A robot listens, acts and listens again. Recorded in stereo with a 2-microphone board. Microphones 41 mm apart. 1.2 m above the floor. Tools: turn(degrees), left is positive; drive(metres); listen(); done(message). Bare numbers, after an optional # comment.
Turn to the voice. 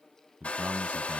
# The man speaking: about 35° right or 145° right.
turn(-35)
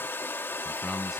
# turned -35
done("Facing the man speaking.")